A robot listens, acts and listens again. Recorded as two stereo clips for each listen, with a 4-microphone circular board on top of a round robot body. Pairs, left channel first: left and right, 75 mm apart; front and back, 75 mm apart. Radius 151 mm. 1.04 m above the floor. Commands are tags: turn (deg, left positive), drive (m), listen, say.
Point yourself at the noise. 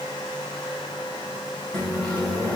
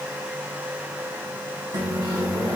<turn deg="165"/>
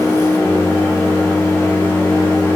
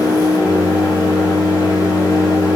<turn deg="35"/>
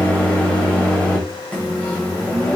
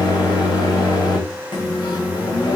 <turn deg="15"/>
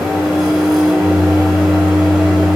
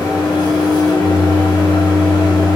<say>Found it: a microwave, straight ahead.</say>